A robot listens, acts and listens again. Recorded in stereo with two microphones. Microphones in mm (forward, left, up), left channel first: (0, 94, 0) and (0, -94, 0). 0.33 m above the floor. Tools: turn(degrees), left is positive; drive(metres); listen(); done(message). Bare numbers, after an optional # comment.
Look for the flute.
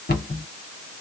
listen()
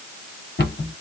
listen()
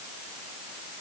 done("I can't make out a flute, only a cupboard door.")